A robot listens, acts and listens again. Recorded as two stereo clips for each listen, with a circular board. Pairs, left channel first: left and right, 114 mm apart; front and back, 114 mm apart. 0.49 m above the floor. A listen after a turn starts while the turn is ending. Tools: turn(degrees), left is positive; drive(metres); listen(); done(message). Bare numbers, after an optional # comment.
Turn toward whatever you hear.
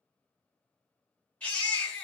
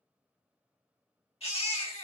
# The baby crying: 15° left.
turn(15)
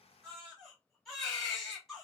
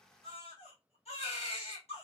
done("Facing the baby crying.")